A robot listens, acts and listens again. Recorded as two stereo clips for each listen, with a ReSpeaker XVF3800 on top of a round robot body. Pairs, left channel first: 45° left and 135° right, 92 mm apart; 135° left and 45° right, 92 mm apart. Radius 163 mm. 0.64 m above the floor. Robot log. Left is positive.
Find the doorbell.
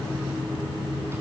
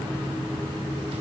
cmd idle
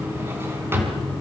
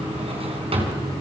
cmd idle
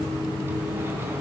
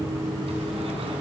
end: I can't make out a doorbell to turn to.